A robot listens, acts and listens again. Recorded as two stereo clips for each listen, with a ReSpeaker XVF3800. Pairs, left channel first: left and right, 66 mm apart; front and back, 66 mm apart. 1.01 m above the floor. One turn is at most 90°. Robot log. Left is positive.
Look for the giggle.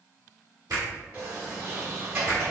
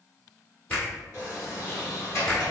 cmd idle
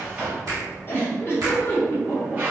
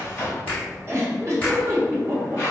note: The giggle: 145° left.
cmd yaw +90
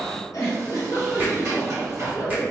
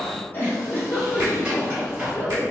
note: The giggle is now 55° left.
cmd yaw +55
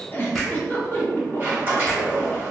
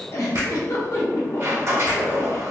note: The giggle is now 30° left.
cmd yaw +30
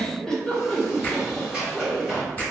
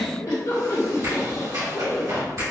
note: The giggle is now 10° left.
cmd yaw +10
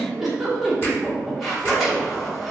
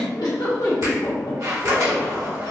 end: Found it: a giggle, straight ahead.